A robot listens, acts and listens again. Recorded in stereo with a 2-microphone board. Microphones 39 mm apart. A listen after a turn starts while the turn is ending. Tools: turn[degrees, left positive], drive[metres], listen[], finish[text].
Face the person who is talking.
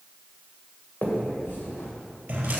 Action: listen[]
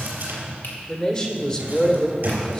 Thought: The man speaking: about 25° left or 155° left.
Action: turn[25]
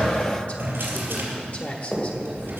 Thought: So it is at 130° left.
Action: turn[130]
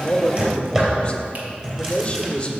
Thought: The man speaking is now 35° left.
Action: turn[35]
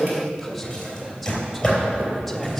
Action: finish[Found it: a man speaking, straight ahead.]